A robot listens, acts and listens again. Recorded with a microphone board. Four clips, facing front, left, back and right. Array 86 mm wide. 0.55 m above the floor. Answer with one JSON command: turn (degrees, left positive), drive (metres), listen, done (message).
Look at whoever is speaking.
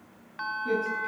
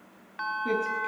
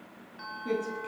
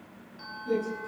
{"turn": 100}
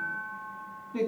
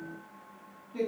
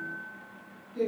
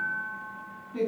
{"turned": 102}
{"done": "Found it: a man speaking, straight ahead, over 4 m away."}